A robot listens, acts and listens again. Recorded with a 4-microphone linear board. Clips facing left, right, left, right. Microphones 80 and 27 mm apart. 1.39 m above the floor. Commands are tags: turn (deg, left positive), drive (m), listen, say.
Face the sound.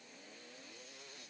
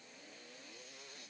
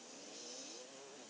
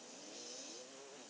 <listen/>
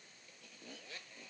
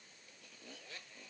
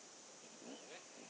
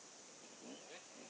<listen/>
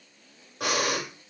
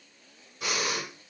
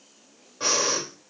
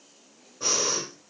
<turn deg="90"/>
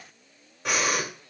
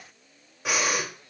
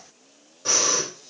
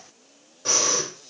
<say>Facing the breathing, 2 to 4 m away.</say>